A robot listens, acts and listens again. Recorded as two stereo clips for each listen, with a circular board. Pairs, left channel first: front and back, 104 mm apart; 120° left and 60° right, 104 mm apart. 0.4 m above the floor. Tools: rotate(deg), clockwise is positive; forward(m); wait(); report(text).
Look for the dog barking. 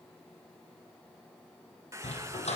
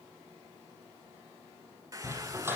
rotate(-10)
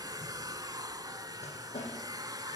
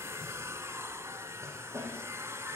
report("Facing the dog barking.")